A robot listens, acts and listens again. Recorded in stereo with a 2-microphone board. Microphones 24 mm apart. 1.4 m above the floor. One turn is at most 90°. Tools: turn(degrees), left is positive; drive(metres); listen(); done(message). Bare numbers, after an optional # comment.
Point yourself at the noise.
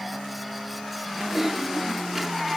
turn(-30)
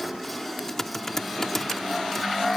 # So it is at 15° left.
turn(15)
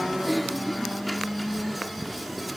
done("Facing the typing on a keyboard.")